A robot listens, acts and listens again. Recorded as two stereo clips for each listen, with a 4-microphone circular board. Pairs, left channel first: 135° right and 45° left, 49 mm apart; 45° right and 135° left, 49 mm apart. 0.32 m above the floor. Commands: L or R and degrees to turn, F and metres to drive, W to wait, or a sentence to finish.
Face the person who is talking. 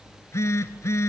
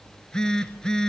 W
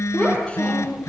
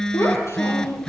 R65
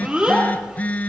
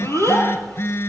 R20
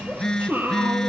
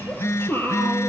Found it: a child speaking, straight ahead, over 4 m away.